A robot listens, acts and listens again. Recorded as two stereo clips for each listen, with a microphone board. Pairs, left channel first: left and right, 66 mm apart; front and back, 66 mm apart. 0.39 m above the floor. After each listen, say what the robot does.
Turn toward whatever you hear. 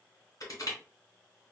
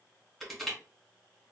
Turn 90° left.
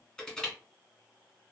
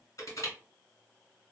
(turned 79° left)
Turn 15° left.
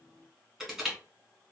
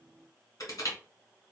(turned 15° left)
Found it: crushing, straight ahead.